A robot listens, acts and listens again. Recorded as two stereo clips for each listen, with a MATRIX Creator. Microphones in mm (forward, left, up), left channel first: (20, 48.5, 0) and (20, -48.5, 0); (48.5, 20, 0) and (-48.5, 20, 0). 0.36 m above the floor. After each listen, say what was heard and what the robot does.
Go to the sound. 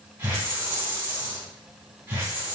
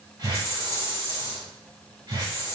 The hiss: 140° right. Turn 140° right.
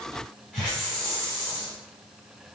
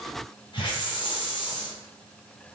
The hiss is now 10° left. Turn 10° left.
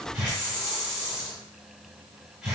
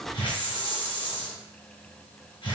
Drive 1.0 m forward.
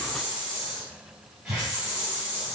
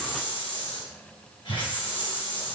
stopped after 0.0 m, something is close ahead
Blocked. The hiss is further on, straight ahead.